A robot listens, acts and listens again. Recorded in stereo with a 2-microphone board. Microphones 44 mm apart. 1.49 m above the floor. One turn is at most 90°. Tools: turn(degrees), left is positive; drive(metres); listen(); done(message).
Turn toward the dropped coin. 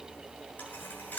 turn(degrees=45)
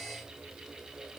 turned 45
listen()
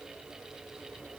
done("I heard a dropped coin, but can't make it out now. It was about straight ahead or 90° left.")